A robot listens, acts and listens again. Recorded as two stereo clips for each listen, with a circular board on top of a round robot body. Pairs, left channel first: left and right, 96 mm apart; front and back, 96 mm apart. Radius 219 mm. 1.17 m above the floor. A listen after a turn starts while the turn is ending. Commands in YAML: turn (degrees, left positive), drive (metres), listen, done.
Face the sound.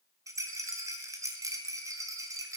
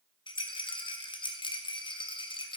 turn: -35
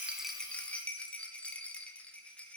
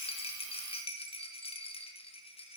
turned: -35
turn: 15
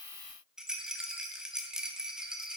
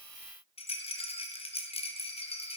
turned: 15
done: "Facing the rattle."